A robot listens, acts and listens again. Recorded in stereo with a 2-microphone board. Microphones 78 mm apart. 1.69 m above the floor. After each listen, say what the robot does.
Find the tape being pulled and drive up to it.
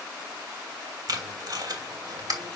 Turn 50° right.
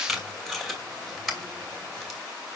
Drive 1.0 m forward.
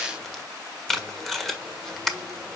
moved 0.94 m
Drive 1.0 m forward.
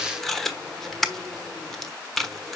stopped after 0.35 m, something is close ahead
I am next to the tape being pulled.